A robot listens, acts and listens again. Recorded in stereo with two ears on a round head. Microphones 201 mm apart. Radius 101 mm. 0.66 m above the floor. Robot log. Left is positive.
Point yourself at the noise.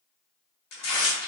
cmd yaw +90
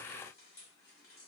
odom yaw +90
cmd idle
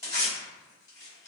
note: The tearing paper is now 15° left.
cmd yaw +15
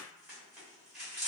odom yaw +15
end: Facing the tearing paper.